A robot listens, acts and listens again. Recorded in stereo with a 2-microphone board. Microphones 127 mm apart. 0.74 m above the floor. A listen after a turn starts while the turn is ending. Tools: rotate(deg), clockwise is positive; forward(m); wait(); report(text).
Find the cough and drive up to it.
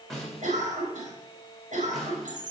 rotate(90)
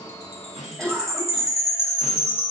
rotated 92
forward(1.0)
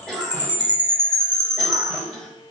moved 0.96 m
forward(1.0)
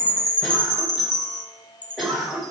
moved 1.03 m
forward(1.0)
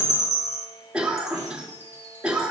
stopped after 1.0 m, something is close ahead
rotate(10)
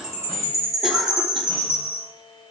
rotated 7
wait()
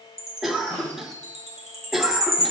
report("I am next to the cough.")